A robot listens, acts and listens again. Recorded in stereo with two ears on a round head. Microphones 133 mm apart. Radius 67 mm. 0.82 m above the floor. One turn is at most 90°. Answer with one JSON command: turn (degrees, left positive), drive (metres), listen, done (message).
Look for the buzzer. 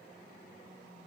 {"listen": true}
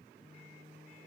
{"listen": true}
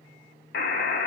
{"turn": 70}
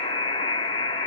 {"turn": 35}
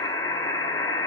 {"turn": 25}
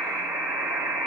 {"turn": -15}
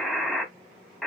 {"done": "Facing the buzzer."}